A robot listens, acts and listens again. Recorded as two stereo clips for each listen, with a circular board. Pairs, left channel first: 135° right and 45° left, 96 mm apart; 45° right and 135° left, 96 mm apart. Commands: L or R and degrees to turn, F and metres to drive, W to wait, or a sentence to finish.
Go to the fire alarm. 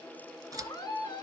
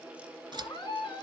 W
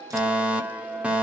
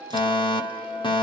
R30
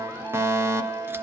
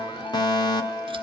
R15
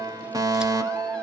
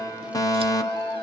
F1.0
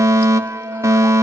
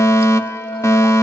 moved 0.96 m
F1.0
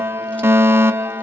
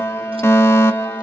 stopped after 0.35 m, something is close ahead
I am next to the fire alarm.